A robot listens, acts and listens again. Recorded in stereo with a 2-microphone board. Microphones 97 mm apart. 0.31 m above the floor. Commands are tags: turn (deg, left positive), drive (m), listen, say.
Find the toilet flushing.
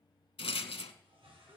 <turn deg="-65"/>
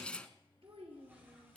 <listen/>
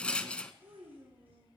<listen/>
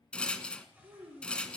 <turn deg="-20"/>
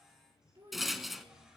<say>Found it: a toilet flushing, straight ahead.</say>